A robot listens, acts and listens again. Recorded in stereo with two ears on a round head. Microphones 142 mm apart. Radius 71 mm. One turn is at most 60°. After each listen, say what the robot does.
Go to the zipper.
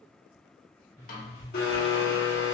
Turn 60° right.
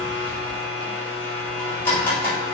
Turn 30° right.
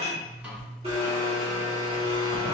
Turn 20° left.
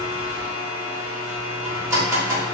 Keep listening.
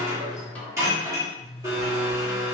Drive 1.0 m forward.
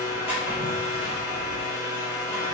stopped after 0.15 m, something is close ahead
Keep listening.
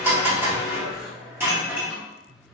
Blocked. The zipper is further on, straight ahead.